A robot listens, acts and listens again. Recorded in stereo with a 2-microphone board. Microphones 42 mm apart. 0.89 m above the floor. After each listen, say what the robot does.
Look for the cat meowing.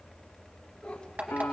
Turn 20° left.
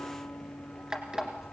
Keep listening.
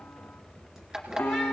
Keep listening.
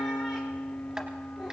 Turn 10° right.
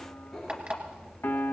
Facing the cat meowing.